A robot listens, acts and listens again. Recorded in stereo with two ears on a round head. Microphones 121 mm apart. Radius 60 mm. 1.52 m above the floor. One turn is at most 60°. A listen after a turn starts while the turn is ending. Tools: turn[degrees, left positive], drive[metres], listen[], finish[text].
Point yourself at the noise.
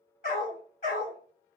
Thought: The dog barking: about 60° left or 120° left.
Action: turn[60]
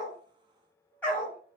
Thought: So it is at 10° left.
Action: turn[10]
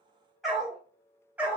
Thought: The dog barking is now 10° right.
Action: turn[-10]
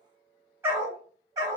Thought: The dog barking is now 30° right.
Action: turn[-30]
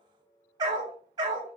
Thought: The dog barking is now 30° right.
Action: turn[-30]
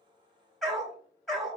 Action: finish[Facing the dog barking, 1 to 2 m away.]